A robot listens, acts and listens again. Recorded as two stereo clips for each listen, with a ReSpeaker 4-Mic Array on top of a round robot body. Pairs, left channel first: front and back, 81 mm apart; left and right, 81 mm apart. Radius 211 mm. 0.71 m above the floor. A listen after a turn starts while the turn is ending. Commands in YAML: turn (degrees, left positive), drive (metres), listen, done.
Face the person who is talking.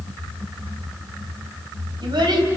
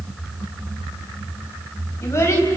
turn: 145
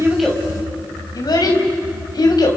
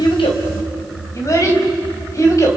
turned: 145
turn: 40
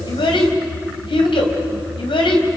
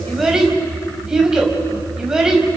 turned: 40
turn: -10
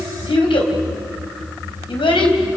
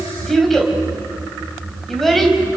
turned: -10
done: "Facing the child speaking, over 4 m away."